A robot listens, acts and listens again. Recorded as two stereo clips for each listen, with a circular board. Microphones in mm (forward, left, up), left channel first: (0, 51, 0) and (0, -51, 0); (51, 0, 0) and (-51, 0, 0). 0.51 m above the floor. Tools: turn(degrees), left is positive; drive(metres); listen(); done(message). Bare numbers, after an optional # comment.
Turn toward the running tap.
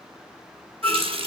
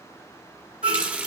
# The running tap: 105° right.
turn(-105)
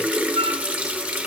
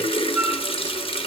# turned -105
# The running tap is now 15° right.
turn(-15)
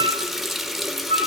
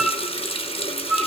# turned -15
done("Facing the running tap.")